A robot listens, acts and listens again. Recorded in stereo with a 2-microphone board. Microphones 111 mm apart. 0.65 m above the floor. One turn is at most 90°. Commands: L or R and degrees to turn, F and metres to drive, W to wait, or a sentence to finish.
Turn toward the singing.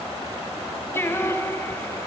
L20
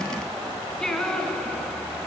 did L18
L30
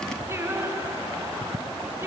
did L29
R20
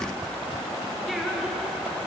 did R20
W
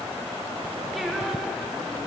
W
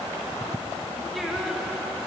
Facing the singing.